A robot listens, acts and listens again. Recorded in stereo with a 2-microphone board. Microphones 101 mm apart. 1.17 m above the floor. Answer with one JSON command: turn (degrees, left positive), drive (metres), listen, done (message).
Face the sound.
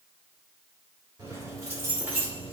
{"turn": -20}
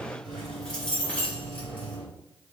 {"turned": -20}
{"turn": 20}
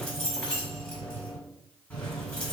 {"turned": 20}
{"turn": 15}
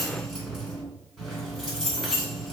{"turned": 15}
{"done": "Found it: keys jangling, straight ahead."}